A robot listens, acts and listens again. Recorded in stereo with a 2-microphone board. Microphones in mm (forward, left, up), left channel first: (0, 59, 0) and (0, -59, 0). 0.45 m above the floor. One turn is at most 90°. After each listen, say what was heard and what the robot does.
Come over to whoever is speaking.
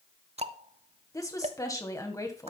The woman speaking: about 30° left or 150° left. Turn 30° left.
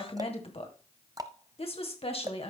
So it is at 120° left. Turn 90° left.
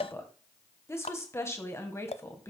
The woman speaking is now 25° left. Turn 25° left.
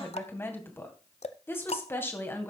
The woman speaking is now 20° left. Turn 20° left.
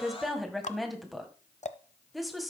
Drive 1.0 m forward.
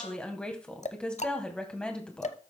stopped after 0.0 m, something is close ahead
The woman speaking is now 10° left. Turn 10° left.
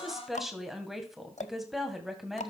Blocked. The woman speaking is further on, straight ahead.